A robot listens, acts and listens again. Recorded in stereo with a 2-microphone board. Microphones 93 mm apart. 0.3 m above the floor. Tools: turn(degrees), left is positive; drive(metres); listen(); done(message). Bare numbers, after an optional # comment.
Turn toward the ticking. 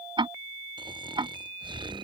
# The ticking: about 60° right or 120° right.
turn(-60)
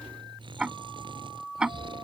# So it is at 10° right.
turn(-10)
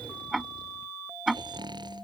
done("Facing the ticking.")